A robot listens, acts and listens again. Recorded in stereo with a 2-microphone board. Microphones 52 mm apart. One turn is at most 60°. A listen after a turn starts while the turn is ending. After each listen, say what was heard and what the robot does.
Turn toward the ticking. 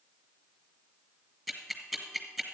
Turn 30° right.
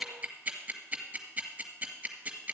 So it is at 145° right. Turn 60° right.
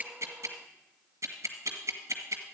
The ticking is now 85° right. Turn 60° right.
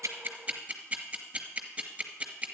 The ticking is now 25° right. Turn 25° right.
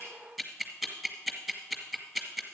Facing the ticking.